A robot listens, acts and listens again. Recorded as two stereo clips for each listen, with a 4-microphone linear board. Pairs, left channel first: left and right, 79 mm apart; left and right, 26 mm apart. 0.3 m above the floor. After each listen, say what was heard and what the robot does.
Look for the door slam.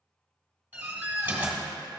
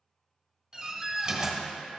The door slam: about 20° right or 160° right. Turn 20° right.
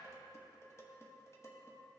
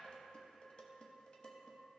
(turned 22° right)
Keep listening.
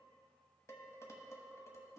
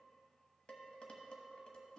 I heard a door slam, but can't make it out now. It was about straight ahead or 135° right.